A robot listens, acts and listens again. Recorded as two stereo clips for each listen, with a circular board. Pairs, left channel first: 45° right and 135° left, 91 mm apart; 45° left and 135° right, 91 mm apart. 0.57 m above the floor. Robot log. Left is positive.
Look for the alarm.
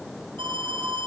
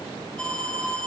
note: The alarm: 125° left.
cmd yaw +125
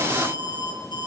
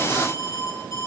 note: The alarm is now 10° right.
cmd yaw -10
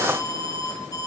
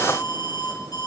end: Found it: an alarm, straight ahead.